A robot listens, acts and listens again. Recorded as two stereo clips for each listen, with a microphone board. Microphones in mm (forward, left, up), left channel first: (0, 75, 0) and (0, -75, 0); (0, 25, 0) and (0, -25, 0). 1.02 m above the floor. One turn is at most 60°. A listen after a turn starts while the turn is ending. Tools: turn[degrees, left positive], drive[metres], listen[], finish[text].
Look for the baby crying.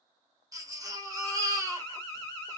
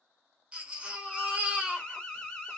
Thought: The baby crying: about 25° right or 155° right.
Action: turn[-25]
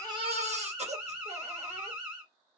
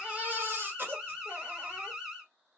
Thought: So it is at 130° right.
Action: turn[-60]
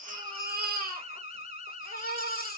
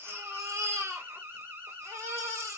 Thought: The baby crying is now 95° right.
Action: turn[-60]
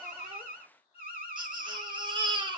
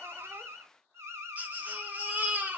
Thought: The baby crying is now 30° right.
Action: turn[-30]
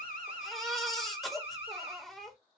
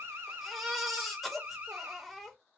Action: finish[Found it: a baby crying, straight ahead, under 1 m away.]